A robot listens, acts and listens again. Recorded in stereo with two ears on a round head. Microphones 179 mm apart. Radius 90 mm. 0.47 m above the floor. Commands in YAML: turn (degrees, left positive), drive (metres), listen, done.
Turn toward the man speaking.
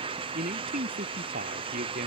turn: -45
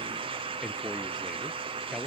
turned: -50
done: "Facing the man speaking."